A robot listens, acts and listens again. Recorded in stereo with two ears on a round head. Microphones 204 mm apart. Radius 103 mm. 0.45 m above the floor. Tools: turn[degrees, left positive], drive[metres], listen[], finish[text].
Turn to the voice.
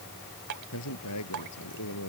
Thought: The man speaking: about 70° left or 110° left.
Action: turn[70]
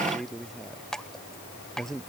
Action: finish[Found it: a man speaking, straight ahead.]